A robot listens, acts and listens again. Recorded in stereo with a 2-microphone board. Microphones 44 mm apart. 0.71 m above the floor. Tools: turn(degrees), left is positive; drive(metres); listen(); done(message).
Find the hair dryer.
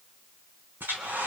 turn(degrees=-50)
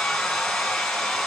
done("Found it: a hair dryer, straight ahead, over 4 m away.")